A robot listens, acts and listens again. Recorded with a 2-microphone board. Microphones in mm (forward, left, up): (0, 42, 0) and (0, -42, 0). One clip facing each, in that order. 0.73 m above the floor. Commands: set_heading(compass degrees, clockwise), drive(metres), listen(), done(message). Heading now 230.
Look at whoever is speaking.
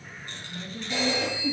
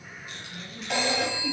set_heading(205)
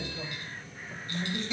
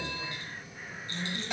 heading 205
set_heading(80)
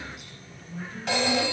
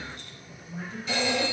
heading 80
set_heading(105)
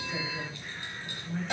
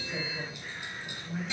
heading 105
done("Facing the woman speaking, 2 to 4 m away.")